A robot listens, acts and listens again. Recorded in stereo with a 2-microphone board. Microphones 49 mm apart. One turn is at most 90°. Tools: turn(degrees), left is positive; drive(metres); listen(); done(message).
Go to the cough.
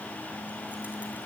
listen()
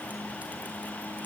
listen()
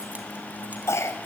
turn(degrees=65)
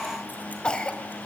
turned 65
turn(degrees=25)
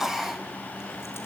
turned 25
drive(metres=1.0)
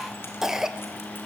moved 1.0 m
turn(degrees=-10)
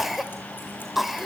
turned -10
drive(metres=1.0)
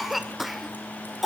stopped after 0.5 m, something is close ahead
done("Arrived at the cough, straight ahead.")